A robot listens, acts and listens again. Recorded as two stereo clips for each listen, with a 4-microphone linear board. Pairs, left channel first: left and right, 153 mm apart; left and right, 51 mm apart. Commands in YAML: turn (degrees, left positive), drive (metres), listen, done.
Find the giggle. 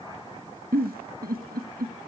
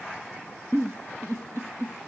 turn: -90
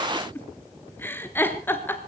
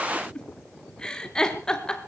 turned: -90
turn: 15
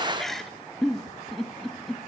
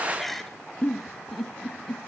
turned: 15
done: "Found it: a giggle, straight ahead."